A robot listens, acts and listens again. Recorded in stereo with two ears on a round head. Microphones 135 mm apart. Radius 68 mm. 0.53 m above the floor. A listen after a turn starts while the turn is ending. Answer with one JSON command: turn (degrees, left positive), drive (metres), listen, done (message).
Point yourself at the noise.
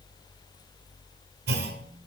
{"turn": -75}
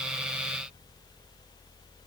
{"listen": true}
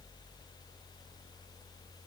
{"done": "I heard a clunk, but can't make it out now. It was about straight ahead or 30° right."}